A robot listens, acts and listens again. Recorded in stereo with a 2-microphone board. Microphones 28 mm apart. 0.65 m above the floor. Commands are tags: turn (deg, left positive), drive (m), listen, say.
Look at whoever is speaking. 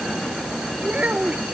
<turn deg="-50"/>
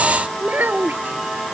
<turn deg="-80"/>
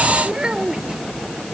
<turn deg="-30"/>
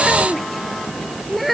<say>Found it: a child speaking, straight ahead.</say>